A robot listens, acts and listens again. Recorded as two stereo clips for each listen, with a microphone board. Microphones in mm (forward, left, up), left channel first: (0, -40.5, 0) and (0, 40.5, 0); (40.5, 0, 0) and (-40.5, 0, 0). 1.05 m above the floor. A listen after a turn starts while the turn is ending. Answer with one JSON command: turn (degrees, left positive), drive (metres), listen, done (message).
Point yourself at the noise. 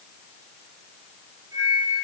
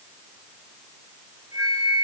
{"turn": 140}
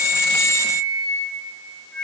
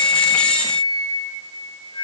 {"turn": -10}
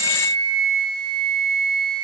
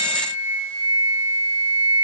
{"done": "Facing the flute, over 4 m away."}